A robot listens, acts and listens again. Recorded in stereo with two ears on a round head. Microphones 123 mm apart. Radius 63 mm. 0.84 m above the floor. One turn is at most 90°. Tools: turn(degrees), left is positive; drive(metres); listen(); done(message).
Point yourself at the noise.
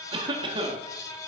turn(degrees=-35)
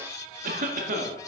turn(degrees=-90)
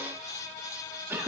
turn(degrees=-15)
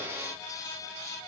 listen()
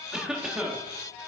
done("Facing the cough, 1 to 2 m away.")